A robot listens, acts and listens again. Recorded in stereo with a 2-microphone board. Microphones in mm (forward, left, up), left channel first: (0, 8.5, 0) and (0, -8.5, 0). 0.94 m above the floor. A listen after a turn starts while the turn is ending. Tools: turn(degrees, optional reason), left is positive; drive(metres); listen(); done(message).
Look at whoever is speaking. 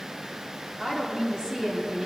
turn(degrees=-90)
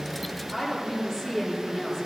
turn(degrees=10, reason="So it is at 10° left.")
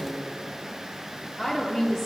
done("Found it: a woman speaking, straight ahead, 2 to 4 m away.")